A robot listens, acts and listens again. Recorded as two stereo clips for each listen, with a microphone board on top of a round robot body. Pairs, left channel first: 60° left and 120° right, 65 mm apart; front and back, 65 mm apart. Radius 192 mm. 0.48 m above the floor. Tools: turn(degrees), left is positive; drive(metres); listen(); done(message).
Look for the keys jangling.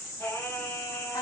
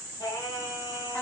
listen()
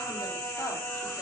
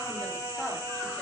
listen()
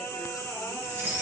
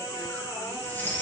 turn(degrees=-65)
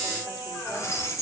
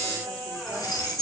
turn(degrees=15)
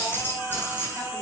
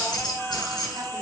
done("Found it: keys jangling, straight ahead.")